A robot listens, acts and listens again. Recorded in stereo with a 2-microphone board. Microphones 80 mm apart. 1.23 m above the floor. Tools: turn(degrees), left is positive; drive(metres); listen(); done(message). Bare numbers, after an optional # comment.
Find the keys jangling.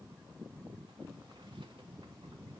listen()
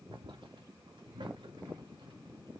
listen()
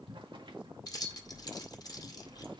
# The keys jangling: about 50° left or 130° left.
turn(50)
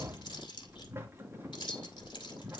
# So it is at 80° left.
turn(80)
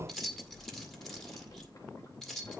done("Found it: keys jangling, straight ahead.")